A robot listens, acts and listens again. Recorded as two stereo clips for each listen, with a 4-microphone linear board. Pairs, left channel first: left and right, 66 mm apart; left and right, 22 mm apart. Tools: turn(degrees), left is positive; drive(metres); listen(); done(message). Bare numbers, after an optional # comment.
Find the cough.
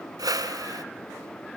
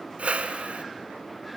listen()
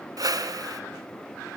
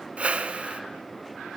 listen()
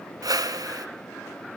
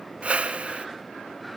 done("I can't make out a cough to turn to.")